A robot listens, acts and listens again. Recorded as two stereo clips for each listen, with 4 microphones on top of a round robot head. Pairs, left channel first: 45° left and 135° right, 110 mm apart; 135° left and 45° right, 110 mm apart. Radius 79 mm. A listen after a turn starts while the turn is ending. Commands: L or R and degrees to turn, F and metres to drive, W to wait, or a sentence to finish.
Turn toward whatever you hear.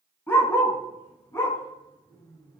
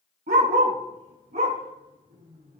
R25
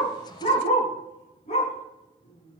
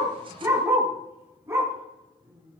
L20
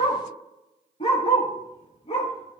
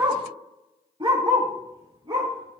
Found it: a dog barking, straight ahead, over 4 m away.